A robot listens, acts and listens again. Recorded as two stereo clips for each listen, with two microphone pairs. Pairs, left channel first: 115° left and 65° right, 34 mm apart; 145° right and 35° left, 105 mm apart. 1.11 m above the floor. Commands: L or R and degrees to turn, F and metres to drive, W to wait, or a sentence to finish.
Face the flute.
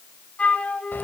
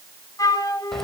L160
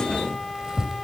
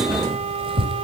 W
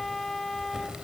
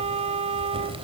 L35
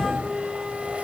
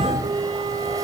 L10
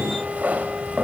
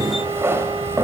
W
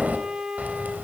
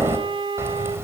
Found it: a flute, straight ahead, 2 to 4 m away.